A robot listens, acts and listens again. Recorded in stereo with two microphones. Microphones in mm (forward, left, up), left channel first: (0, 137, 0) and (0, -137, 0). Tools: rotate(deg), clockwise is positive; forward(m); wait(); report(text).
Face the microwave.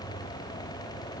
wait()
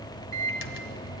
rotate(-50)
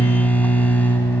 report("Found it: a microwave, straight ahead, 1 to 2 m away.")